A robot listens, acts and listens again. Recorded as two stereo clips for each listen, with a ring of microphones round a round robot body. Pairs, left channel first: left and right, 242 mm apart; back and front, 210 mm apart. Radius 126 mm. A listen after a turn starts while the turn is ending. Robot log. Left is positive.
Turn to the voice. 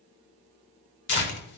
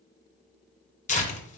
cmd idle
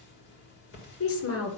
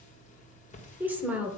note: The woman speaking: 80° left.
cmd yaw +80
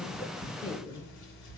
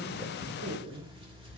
note: The woman speaking is now 15° left.
cmd yaw +15
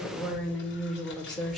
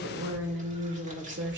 end: Found it: a woman speaking, straight ahead, 2 to 4 m away.